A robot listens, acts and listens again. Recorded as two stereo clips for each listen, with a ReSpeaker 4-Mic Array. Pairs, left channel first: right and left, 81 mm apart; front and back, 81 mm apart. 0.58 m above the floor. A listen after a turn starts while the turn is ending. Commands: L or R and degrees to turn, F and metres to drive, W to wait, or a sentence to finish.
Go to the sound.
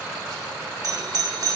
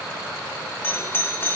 L60
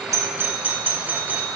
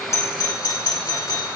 L25
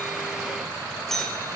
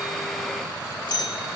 F1.0
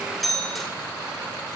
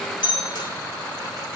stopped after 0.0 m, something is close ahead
Blocked. The doorbell is further on, straight ahead.